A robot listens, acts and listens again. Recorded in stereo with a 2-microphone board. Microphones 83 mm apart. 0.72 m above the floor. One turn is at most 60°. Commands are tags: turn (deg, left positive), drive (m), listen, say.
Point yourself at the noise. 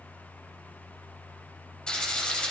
<turn deg="30"/>
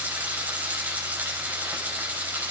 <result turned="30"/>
<turn deg="-20"/>
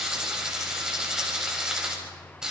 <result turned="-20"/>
<turn deg="-10"/>
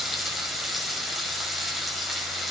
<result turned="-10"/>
<say>Found it: frying, straight ahead.</say>